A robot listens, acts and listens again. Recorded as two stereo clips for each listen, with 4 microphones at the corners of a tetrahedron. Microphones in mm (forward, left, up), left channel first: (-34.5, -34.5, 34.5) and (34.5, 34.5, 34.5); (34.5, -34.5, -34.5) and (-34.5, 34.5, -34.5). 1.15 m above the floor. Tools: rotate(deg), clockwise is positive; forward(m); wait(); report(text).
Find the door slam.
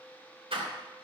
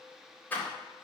rotate(-25)
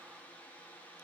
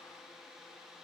report("I heard a door slam from this way, but can't make it out now.")